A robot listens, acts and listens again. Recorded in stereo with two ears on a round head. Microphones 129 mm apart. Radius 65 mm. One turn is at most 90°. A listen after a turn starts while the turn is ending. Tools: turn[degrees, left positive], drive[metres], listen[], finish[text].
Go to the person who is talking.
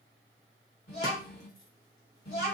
Action: turn[90]
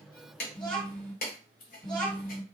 Thought: So it is at 15° left.
Action: turn[15]
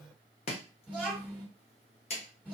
Action: drive[1.0]
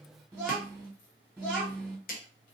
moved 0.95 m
Action: drive[1.0]
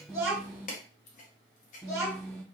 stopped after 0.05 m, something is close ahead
Action: finish[I am next to the child speaking.]